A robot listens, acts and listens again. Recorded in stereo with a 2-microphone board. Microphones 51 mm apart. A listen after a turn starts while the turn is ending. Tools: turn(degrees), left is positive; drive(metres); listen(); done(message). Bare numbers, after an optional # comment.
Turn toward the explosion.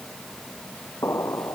# The explosion: about 65° left or 115° left.
turn(65)
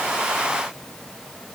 listen()
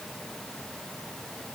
done("I heard an explosion, but can't make it out now. It was about straight ahead or 50° left.")